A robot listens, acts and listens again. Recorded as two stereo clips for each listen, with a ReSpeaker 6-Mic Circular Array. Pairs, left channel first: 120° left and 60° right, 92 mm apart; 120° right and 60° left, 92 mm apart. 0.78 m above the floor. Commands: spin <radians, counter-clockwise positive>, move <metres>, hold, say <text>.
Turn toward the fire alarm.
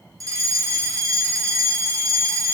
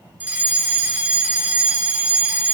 spin -0.17
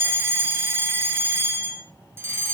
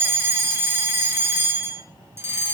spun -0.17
say Facing the fire alarm.